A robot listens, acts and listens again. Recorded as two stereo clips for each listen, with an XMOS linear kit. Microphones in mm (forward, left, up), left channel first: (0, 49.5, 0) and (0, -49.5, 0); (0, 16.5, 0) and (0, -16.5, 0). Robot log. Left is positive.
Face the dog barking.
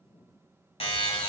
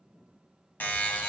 cmd idle
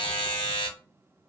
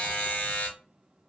cmd idle
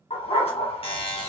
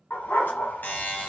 cmd yaw +90
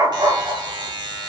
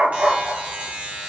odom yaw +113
note: So it is at 50° right.
cmd yaw -50
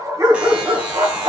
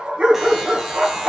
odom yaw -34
note: The dog barking is now 45° right.
cmd yaw -45
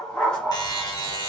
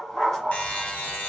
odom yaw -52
note: The dog barking is now 10° left.
cmd yaw +10
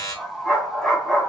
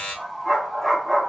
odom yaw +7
end: Found it: a dog barking, straight ahead.